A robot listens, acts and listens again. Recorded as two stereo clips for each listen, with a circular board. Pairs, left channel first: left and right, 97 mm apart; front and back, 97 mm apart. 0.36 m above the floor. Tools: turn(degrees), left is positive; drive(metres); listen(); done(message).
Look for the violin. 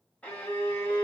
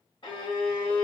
turn(degrees=15)
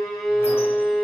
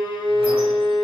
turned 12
done("Facing the violin.")